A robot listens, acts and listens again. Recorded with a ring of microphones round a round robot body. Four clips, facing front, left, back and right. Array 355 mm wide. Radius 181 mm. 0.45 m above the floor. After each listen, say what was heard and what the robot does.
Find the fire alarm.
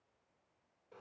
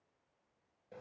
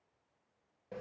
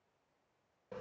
Keep listening.
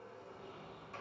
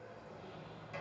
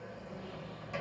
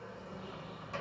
Keep listening.
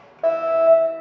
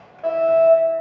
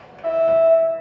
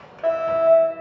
The fire alarm: 20° right. Turn 20° right.
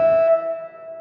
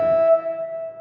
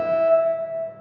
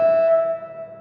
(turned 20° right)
Facing the fire alarm.